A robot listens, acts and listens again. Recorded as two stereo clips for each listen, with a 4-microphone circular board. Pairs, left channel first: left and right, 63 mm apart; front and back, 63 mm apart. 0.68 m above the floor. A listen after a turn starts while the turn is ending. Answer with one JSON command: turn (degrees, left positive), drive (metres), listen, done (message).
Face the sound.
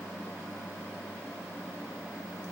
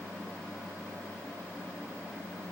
{"listen": true}
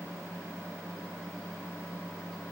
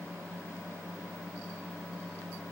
{"listen": true}
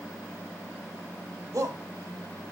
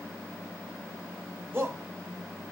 {"turn": -125}
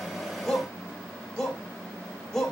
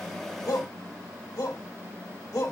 {"turn": 10}
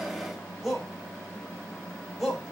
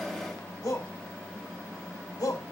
{"done": "Facing the shout, 2 to 4 m away."}